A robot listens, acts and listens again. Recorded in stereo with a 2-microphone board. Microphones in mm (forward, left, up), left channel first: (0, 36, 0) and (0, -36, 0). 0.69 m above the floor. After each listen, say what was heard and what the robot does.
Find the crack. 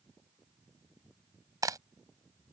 The crack: about 55° right or 125° right. Turn 55° right.
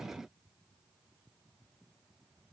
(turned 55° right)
Keep listening.
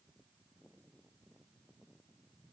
I heard a crack, but can't make it out now. It was about straight ahead or 70° right.